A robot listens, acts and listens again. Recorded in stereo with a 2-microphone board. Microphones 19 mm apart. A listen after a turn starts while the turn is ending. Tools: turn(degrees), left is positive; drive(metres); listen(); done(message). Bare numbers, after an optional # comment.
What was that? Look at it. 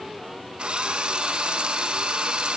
# The drill: about 65° right or 115° right.
turn(-65)
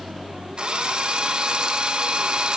# So it is at 50° right.
turn(-50)
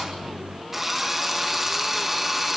# The drill is now 10° right.
turn(-10)
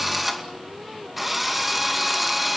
done("Facing the drill.")